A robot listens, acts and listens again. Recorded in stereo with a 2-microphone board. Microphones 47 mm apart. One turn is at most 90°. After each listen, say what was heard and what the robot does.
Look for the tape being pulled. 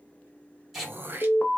Turn 30° right.
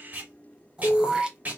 So it is at 145° right. Turn 90° right.
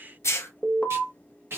The tape being pulled is now 55° right. Turn 55° right.
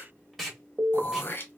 Facing the tape being pulled, 1 to 2 m away.